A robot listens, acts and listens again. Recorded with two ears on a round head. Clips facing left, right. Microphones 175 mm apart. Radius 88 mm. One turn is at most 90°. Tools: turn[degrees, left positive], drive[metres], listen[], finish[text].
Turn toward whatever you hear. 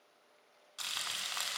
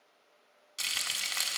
Thought: The frying: about 30° right or 150° right.
Action: turn[-30]
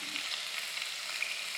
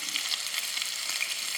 Thought: So it is at 115° right.
Action: turn[-90]
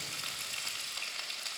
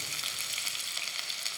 Thought: The frying is now 35° right.
Action: turn[-35]
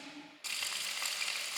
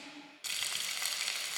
Thought: The frying is now 15° right.
Action: turn[-15]
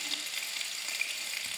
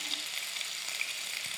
Action: finish[Facing the frying, under 1 m away.]